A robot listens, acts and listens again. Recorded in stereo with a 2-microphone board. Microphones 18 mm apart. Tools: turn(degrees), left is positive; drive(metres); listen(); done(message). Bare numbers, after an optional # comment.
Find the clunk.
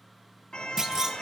# The clunk: about 35° right or 145° right.
turn(-35)
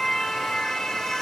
listen()
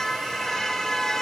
done("I heard a clunk, but can't make it out now. It was about straight ahead or 110° right.")